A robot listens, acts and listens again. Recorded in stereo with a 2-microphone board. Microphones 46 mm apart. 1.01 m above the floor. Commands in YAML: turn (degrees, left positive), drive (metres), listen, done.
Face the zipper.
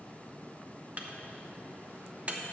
listen: true
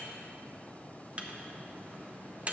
listen: true
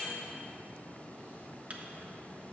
done: "I can't make out a zipper to turn to."